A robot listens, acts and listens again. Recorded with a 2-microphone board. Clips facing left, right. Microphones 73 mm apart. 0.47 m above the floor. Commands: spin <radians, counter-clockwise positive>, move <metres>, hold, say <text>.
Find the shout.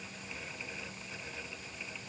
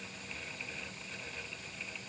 hold
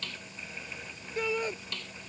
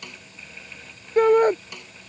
spin -0.96
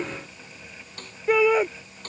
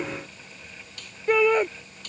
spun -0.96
say Found it: a shout, straight ahead.